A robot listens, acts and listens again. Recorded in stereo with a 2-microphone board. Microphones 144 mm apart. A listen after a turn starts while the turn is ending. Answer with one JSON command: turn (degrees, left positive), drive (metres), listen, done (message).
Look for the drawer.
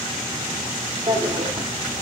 {"turn": -35}
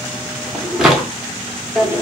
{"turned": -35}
{"done": "Facing the drawer."}